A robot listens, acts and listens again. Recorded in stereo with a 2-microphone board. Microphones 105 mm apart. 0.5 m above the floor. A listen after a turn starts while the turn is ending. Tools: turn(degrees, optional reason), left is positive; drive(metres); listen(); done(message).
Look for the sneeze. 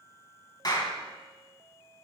listen()
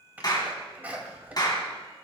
turn(degrees=-15, reason="The sneeze: about 15° right or 165° right.")
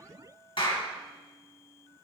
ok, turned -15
listen()
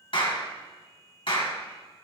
done("I heard a sneeze, but can't make it out now. It was about straight ahead or 150° right.")